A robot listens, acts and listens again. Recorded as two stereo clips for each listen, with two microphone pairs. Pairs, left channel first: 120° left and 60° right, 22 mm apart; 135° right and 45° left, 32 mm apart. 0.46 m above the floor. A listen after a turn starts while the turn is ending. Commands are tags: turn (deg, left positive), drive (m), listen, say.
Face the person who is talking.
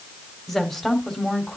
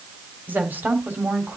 <turn deg="60"/>
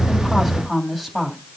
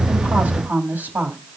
<turn deg="30"/>
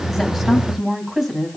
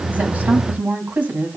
<turn deg="15"/>
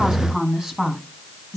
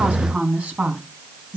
<say>Facing the woman speaking, over 4 m away.</say>